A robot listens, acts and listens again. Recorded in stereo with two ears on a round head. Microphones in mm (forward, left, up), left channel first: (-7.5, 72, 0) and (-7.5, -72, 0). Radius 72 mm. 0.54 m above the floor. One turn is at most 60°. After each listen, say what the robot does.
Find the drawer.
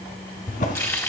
Turn 60° left.
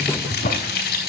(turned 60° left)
Turn 60° left.
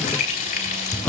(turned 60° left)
Turn 10° left.
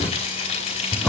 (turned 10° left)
Facing the drawer, 2 to 4 m away.